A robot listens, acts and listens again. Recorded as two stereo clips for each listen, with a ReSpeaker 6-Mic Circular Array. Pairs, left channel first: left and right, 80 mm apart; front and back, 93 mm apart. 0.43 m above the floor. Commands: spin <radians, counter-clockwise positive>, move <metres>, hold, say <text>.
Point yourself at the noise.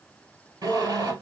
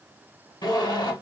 spin -0.79
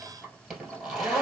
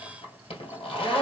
say Found it: a zipper, straight ahead, 1 to 2 m away.